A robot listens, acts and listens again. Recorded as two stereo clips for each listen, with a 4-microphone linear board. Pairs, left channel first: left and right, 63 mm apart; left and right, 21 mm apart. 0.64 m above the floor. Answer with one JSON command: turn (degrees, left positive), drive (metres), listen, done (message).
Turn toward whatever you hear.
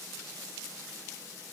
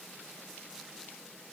{"listen": true}
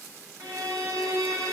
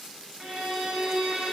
{"turn": -50}
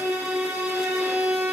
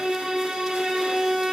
{"turn": -75}
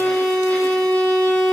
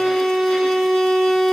{"done": "Facing the violin."}